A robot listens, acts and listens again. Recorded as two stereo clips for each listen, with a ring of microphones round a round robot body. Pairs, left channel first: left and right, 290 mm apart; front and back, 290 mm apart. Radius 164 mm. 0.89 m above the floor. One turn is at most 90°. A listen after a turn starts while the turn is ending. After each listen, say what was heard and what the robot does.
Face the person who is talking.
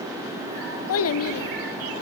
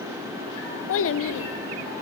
The child speaking: 45° left. Turn 45° left.
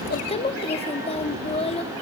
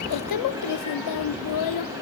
The child speaking is now 20° left. Turn 20° left.
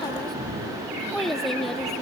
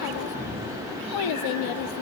Found it: a child speaking, straight ahead.